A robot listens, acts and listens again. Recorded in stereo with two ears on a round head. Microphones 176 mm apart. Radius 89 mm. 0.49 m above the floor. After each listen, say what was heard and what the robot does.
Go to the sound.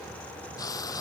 The frying: about 20° left or 160° left. Turn 20° left.
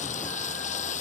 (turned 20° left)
So it is at 140° left. Turn 140° left.
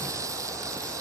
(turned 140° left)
The frying is now 15° right. Turn 15° right.
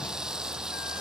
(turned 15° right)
Drive 1.0 m forward.
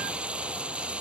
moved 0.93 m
Drive 1.0 m forward.
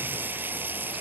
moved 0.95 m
The frying is now 10° right. Turn 10° right.
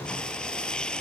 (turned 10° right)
Drive 1.0 m forward.
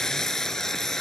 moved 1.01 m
Drive 1.0 m forward.
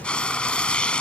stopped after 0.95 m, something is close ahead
Arrived at the frying, straight ahead.